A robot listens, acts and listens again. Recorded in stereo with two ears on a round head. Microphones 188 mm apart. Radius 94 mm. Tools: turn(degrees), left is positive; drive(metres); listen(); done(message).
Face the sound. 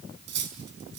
turn(degrees=-55)
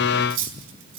turn(degrees=-70)
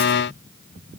listen()
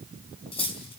turn(degrees=30)
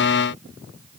listen()
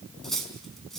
done("Found it: cutlery clinking, straight ahead.")